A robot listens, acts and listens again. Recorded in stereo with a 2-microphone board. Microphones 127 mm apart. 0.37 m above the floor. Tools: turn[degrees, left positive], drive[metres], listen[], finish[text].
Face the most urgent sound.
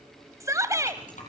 Thought: The shout: about 25° right or 155° right.
Action: turn[-25]
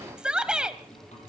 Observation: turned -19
Action: finish[Found it: a shout, straight ahead, 1 to 2 m away.]